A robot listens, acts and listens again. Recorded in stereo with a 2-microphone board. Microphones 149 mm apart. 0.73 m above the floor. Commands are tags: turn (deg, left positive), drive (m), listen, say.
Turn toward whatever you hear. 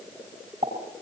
<turn deg="-50"/>
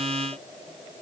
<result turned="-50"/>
<listen/>
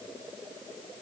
<say>I heard a pop, but can't make it out now. It was about straight ahead or 80° right.</say>